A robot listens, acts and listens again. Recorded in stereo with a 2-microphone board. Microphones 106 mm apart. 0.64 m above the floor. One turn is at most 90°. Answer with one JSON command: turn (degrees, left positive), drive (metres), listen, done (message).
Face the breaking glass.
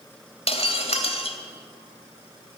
{"turn": 75}
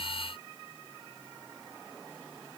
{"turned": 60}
{"listen": true}
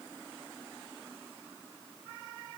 {"done": "I heard breaking glass, but can't make it out now. It was about 15° left or 45° left."}